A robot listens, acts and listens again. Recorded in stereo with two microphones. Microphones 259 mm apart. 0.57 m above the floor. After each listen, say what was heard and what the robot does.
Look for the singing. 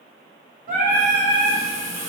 The singing: about 35° right or 145° right. Turn 35° right.
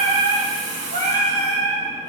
The singing: about 40° right or 140° right. Turn 40° right.
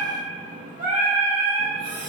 The singing: about 35° right or 145° right. Turn 35° right.
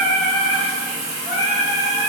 So it is at 15° right. Turn 15° right.
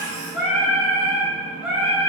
Facing the singing, 1 to 2 m away.